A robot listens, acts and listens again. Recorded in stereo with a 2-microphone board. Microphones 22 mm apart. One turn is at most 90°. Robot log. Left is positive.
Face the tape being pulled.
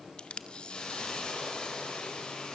note: The tape being pulled: about 50° left or 130° left.
cmd yaw +50
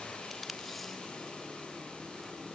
cmd idle
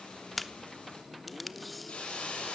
end: Found it: tape being pulled, straight ahead, under 1 m away.